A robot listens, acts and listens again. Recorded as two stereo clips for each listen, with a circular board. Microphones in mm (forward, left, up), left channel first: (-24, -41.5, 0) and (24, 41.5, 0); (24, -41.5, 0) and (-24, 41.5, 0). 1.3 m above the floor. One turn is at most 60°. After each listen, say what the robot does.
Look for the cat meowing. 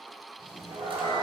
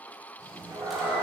Turn 60° left.
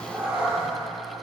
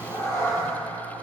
Turn 10° right.
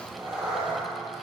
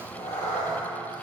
Turn 20° right.
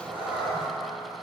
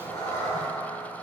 Turn 10° right.
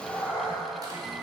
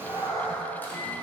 Turn 10° right.
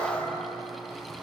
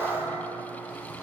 Found it: a cat meowing, straight ahead.